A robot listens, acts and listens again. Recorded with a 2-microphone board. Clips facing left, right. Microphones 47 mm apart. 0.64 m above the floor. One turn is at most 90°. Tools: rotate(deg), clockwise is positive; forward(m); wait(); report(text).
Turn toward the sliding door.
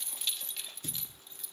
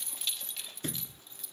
rotate(55)
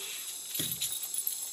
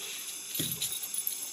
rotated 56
wait()
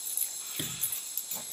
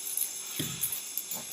report("Found it: a sliding door, straight ahead.")